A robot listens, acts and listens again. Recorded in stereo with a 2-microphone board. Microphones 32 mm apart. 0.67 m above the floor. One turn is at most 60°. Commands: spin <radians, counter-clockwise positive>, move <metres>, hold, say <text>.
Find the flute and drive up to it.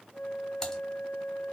spin 1.05
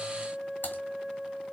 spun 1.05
move 1.0
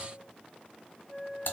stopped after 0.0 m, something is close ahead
say Something is in my way. I am facing the flute but have not reached it.